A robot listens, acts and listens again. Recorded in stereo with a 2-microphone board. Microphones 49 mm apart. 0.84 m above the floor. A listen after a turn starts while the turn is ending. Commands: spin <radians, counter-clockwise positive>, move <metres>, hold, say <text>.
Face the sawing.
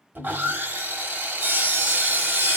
spin -0.79
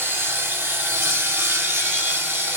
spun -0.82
spin -1.40
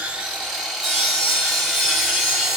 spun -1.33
say Facing the sawing.